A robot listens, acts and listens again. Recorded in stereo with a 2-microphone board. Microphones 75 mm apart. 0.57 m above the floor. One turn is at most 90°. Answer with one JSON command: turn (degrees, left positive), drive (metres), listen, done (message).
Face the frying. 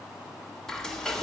{"turn": 30}
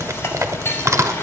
{"listen": true}
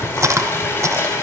{"turn": 90}
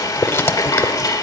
{"turn": 65}
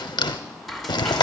{"done": "Found it: frying, straight ahead."}